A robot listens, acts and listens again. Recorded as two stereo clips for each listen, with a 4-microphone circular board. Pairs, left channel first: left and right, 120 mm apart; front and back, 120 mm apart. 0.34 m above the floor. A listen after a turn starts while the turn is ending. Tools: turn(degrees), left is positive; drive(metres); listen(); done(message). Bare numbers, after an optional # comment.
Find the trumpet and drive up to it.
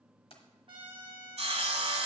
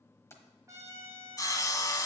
# The trumpet: 120° right.
turn(-120)
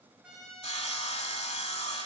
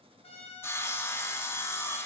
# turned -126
drive(1.0)
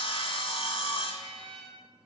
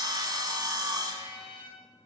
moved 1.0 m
# The trumpet is now 10° left.
turn(10)
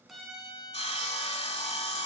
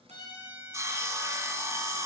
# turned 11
drive(1.0)
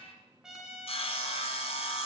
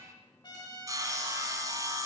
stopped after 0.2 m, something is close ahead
done("I am next to the trumpet.")